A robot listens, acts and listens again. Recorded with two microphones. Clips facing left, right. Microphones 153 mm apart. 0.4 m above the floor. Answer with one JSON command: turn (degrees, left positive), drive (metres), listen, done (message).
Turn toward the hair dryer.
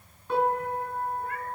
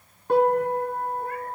{"listen": true}
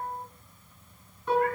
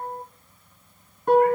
{"listen": true}
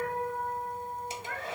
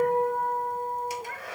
{"turn": 25}
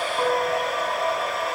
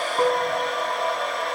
{"done": "Facing the hair dryer."}